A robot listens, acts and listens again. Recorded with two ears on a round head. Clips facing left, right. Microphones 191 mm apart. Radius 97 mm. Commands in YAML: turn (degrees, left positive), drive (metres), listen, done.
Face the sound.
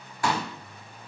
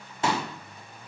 turn: -20
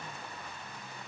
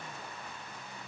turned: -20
listen: true
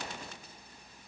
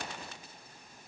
done: "I heard a pop, but can't make it out now. It was about straight ahead or 140° right."